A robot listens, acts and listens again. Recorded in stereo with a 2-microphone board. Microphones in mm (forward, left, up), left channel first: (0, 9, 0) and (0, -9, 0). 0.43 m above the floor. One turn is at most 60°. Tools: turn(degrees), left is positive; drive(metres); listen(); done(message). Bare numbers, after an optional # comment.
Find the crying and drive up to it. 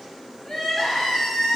# The crying: about 30° left or 150° left.
turn(30)
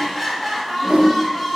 drive(1.0)
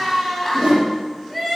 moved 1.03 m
drive(1.0)
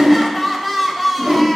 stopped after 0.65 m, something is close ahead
done("Arrived at the crying, straight ahead.")